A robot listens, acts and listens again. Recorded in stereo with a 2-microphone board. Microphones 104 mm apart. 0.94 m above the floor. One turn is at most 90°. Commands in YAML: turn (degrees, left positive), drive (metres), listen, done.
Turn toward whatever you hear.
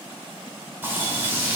turn: -20
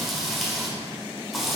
done: "Found it: frying, straight ahead, 1 to 2 m away."